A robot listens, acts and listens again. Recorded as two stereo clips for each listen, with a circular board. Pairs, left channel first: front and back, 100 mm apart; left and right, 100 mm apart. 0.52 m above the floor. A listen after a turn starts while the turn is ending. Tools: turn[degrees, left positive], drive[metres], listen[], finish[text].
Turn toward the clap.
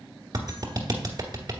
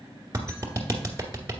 Thought: The clap: 135° right.
Action: turn[-135]
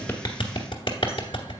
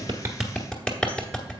Thought: The clap is now 10° left.
Action: turn[10]
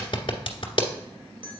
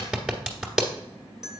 Action: finish[Found it: a clap, straight ahead.]